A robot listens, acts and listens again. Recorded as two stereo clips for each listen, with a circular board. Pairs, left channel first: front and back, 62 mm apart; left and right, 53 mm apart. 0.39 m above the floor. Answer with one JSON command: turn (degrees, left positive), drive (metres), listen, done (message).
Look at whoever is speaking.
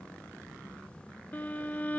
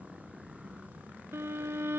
{"listen": true}
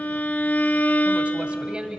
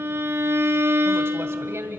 {"turn": -105}
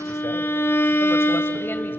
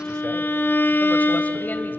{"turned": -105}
{"listen": true}
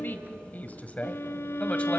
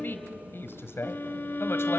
{"turn": 65}
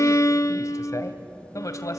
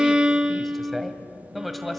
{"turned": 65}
{"done": "Facing the woman speaking."}